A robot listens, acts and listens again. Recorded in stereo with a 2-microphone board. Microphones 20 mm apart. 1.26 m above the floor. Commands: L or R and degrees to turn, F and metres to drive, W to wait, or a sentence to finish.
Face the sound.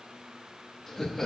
L20
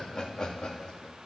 L135
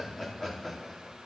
L10
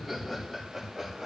Found it: laughter, straight ahead.